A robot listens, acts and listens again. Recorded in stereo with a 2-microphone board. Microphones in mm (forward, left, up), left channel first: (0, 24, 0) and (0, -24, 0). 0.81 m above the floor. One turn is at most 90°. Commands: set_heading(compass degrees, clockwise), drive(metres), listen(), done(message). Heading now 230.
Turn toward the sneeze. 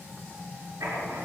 listen()
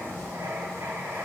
listen()
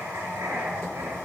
done("I can't make out a sneeze, only writing.")